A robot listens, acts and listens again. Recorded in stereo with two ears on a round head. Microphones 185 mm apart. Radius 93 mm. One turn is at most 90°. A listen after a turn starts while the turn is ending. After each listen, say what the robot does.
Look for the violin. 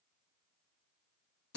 Keep listening.
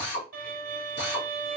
Turn 45° right.
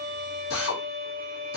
Facing the violin, 1 to 2 m away.